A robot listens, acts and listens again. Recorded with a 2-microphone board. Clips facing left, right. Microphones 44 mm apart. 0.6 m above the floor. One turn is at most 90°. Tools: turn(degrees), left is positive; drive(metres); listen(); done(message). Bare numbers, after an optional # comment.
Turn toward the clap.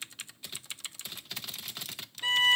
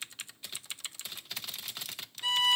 listen()
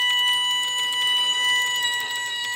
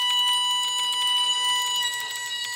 listen()
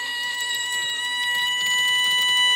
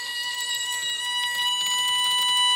done("I can't make out a clap to turn to.")